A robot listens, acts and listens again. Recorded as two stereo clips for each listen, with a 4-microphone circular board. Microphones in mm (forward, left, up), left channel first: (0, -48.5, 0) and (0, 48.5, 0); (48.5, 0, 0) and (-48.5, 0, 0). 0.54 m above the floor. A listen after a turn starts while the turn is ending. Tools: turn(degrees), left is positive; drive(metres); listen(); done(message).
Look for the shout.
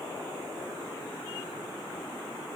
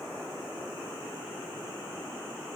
listen()
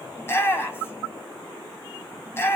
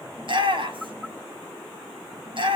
turn(degrees=-155)
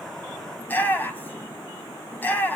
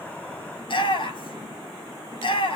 turn(degrees=-20)
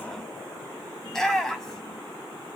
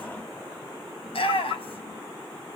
done("Found it: a shout, straight ahead, 2 to 4 m away.")